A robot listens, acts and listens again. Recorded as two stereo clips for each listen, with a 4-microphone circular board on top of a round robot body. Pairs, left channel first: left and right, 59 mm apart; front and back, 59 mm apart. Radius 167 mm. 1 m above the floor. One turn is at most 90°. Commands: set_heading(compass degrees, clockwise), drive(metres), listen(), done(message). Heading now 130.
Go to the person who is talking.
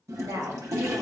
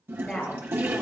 set_heading(200)
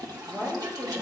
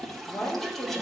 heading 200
set_heading(230)
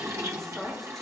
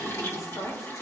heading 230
drive(1.0)
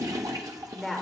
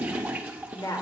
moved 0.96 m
drive(1.0)
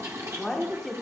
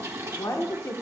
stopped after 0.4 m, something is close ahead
done("I am next to the woman speaking.")